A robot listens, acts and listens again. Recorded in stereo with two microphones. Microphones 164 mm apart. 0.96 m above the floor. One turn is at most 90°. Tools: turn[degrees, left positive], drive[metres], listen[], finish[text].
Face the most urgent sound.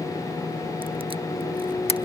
Action: listen[]
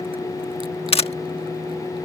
Action: listen[]
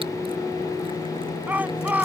Action: turn[-30]
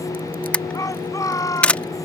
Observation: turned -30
Thought: So it is at 20° left.
Action: turn[20]
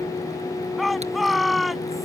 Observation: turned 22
Action: finish[Facing the shout.]